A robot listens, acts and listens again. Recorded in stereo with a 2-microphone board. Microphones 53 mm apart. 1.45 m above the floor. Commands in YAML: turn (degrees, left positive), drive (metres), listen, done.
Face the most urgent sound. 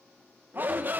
turn: -40
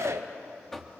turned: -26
turn: -115
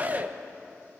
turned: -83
turn: -35
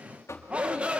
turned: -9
turn: -25
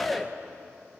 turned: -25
done: "Found it: a shout, straight ahead."